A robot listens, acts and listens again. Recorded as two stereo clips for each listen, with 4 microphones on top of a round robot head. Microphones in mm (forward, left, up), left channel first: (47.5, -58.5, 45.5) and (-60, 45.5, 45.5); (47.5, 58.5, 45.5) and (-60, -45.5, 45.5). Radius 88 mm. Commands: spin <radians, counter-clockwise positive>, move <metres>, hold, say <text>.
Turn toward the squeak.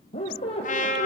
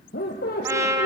spin 0.17
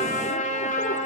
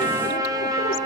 hold
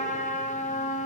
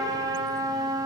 hold
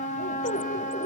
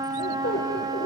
say Found it: a squeak, straight ahead, 2 to 4 m away.